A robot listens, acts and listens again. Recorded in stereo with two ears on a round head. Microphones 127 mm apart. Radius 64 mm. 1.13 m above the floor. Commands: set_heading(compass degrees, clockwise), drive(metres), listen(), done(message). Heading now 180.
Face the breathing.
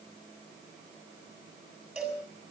listen()
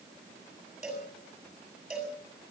listen()
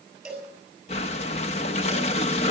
set_heading(135)
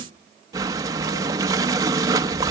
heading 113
set_heading(138)
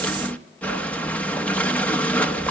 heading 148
set_heading(138)
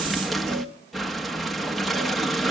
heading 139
done("Facing the breathing, under 1 m away.")